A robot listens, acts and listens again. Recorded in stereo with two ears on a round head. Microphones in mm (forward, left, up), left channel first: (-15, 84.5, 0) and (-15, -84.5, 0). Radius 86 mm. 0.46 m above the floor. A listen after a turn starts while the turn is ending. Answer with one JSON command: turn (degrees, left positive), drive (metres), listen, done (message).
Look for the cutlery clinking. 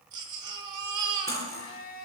{"turn": 15}
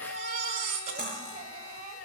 {"done": "Facing the cutlery clinking, over 4 m away."}